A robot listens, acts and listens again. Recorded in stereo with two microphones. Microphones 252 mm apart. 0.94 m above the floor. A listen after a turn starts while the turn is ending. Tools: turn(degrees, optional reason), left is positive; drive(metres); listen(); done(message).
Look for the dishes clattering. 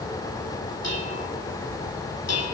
turn(degrees=90)
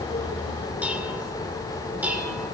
done("Facing the dishes clattering, 2 to 4 m away.")